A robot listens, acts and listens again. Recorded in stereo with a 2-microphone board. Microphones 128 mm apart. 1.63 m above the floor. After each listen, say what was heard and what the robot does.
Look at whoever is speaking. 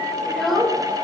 Turn 30° left.
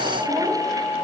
Keep listening.
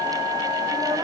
Keep listening.
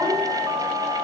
I heard a child speaking, but can't make it out now. It was about 30° right or 150° left.